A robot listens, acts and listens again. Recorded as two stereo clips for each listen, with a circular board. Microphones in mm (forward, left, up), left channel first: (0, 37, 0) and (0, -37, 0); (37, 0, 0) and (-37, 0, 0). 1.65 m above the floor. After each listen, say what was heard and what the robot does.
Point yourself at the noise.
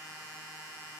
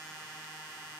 Keep listening.
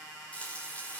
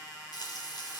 The frying: 20° left. Turn 20° left.
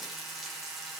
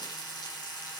Facing the frying.